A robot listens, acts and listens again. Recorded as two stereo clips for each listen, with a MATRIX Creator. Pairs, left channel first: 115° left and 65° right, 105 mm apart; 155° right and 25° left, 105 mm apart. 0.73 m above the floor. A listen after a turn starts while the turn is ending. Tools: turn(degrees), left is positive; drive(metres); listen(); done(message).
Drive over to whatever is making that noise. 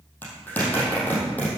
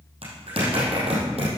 turn(degrees=40)
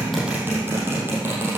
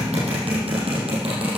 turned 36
drive(metres=1.0)
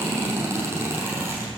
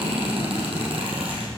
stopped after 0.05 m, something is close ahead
done("Something is in my way. I am facing the zipper but have not reached it.")